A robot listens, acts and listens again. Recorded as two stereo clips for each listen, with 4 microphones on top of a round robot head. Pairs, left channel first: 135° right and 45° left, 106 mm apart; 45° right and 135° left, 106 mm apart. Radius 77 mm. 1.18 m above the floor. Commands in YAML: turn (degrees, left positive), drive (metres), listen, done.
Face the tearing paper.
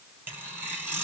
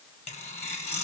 turn: -25
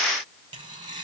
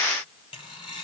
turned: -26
done: "Found it: tearing paper, straight ahead."